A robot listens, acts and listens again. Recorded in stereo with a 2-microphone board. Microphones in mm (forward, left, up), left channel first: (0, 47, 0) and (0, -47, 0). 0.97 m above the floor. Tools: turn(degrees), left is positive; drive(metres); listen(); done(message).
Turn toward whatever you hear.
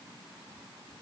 listen()
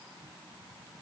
listen()
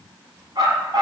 turn(degrees=-50)
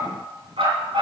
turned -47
turn(degrees=-80)
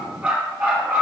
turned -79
turn(degrees=-15)
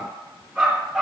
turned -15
done("Found it: a dog barking, straight ahead, 2 to 4 m away.")